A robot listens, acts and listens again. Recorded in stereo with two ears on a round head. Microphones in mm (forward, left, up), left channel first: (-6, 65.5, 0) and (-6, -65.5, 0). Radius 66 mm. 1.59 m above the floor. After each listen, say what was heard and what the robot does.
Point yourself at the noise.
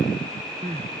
The crying: about 45° right or 135° right. Turn 45° right.
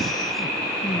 Facing the crying.